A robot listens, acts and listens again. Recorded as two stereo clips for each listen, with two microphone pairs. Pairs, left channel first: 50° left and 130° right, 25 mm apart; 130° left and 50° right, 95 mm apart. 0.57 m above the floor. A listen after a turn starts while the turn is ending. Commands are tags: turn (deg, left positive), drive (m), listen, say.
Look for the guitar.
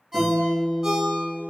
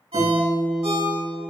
<turn deg="-155"/>
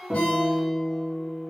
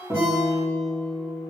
<turn deg="-65"/>
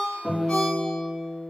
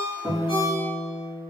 <say>Found it: a guitar, straight ahead.</say>